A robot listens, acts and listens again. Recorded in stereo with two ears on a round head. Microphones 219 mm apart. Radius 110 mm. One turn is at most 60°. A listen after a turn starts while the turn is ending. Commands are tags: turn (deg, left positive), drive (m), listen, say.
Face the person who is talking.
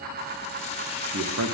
<turn deg="-60"/>
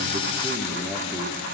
<turn deg="-15"/>
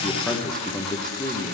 <say>Found it: a man speaking, straight ahead, 1 to 2 m away.</say>